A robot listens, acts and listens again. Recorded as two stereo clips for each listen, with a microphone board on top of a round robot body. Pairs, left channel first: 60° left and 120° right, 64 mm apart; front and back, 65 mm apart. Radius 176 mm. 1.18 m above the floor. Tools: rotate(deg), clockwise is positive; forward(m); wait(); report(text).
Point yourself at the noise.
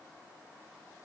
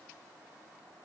wait()
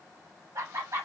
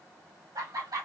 rotate(160)
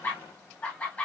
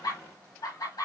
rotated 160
report("Found it: laughter, straight ahead.")